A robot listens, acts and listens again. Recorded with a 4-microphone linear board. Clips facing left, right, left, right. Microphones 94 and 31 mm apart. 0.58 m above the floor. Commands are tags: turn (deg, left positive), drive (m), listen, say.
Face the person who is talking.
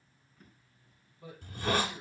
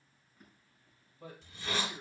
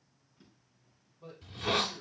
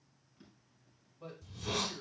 <turn deg="-55"/>
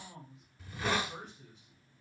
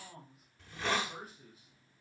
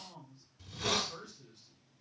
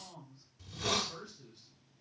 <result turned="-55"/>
<say>Facing the man speaking.</say>